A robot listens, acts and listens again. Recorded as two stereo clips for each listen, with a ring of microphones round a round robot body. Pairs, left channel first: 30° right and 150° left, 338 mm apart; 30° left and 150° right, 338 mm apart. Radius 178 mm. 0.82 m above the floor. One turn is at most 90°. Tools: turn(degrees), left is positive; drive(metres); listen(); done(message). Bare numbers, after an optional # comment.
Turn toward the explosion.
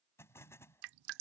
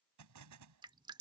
# The explosion: 115° right.
turn(-90)
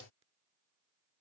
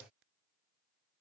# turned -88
# Nothing new. It was at 25° right.
turn(-25)
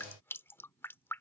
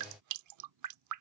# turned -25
done("Facing where the explosion came from. I can't hear it now.")